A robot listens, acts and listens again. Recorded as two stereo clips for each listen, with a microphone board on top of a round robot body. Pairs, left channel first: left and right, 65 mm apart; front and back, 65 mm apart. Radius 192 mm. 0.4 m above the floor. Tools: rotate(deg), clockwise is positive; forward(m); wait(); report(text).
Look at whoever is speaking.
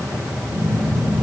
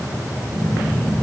wait()
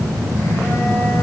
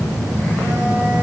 wait()
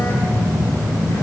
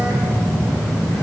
report("I can't make out anyone speaking to turn to.")